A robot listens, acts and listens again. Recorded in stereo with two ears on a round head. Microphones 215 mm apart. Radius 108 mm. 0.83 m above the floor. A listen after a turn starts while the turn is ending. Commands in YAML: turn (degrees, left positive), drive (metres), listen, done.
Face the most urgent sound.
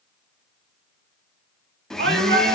turn: -45
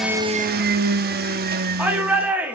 turn: -10
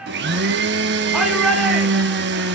done: "Facing the shout, 2 to 4 m away."